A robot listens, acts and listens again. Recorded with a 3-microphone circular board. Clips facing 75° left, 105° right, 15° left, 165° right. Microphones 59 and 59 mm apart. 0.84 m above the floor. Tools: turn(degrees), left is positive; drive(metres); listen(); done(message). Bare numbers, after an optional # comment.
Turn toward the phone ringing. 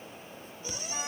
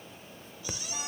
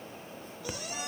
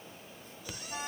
# The phone ringing: 55° right.
turn(-55)
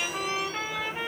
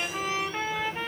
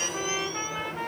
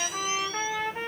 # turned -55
listen()
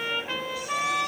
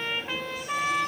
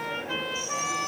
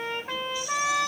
listen()
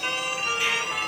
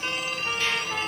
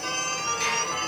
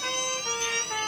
done("Facing the phone ringing, 1 to 2 m away.")